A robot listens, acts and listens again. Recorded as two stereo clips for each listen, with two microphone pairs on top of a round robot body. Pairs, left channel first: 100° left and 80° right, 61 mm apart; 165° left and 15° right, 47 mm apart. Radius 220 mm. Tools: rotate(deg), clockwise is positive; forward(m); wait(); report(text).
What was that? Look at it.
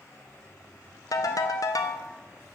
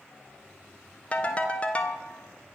rotate(-100)
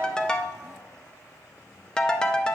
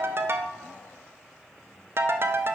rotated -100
rotate(-20)
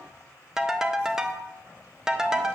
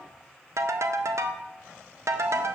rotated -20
report("Found it: a ringtone, straight ahead, under 1 m away.")